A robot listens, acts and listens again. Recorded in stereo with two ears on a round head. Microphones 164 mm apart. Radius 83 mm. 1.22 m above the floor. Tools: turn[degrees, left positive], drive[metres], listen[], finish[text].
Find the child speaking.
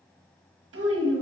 Action: turn[-90]
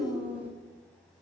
Thought: So it is at 10° right.
Action: turn[-10]
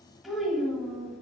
Action: finish[Found it: a child speaking, straight ahead, 1 to 2 m away.]